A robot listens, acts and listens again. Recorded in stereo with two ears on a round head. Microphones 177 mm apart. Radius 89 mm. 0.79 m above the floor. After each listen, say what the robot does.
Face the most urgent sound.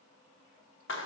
Keep listening.
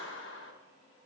Keep listening.
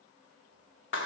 I can't make out anything urgent, only a clap.